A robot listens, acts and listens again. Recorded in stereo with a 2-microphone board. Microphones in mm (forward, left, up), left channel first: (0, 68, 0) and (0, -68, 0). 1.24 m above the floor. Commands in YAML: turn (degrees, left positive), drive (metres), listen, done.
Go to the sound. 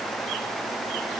listen: true
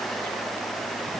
listen: true
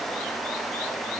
done: "I can't make out anything."